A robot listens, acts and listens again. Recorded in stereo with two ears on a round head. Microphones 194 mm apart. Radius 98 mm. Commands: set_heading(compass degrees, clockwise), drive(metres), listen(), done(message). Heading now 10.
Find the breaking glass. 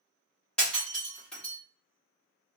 set_heading(340)
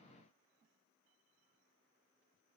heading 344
listen()
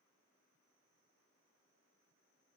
done("I heard breaking glass, but can't make it out now. It was about 20° right or 150° left.")